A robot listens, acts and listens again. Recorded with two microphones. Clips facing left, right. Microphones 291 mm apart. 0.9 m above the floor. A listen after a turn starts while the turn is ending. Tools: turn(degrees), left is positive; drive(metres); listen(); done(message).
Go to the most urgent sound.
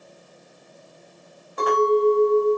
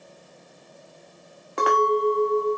listen()
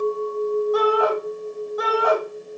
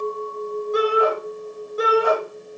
turn(degrees=-35)
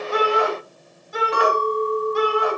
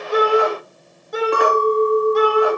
turn(degrees=-110)
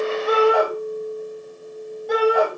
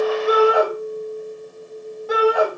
drive(metres=1.0)
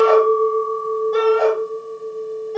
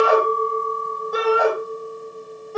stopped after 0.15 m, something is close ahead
done("Something is in my way. I am facing the shout but have not reached it.")